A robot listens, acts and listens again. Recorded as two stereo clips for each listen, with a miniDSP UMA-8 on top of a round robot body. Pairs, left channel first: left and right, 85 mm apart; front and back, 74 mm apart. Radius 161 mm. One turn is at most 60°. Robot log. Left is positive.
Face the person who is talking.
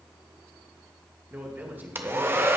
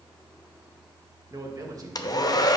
note: The man speaking: 155° right.
cmd yaw -60
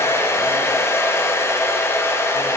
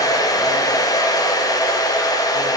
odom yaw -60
note: Nothing new. It was at 95° right.
cmd yaw -60
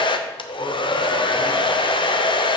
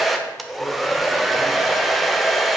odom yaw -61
note: Nothing new. It was at 35° right.
cmd yaw -35
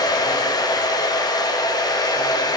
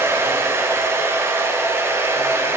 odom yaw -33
end: Facing where the man speaking came from. I can't hear it now.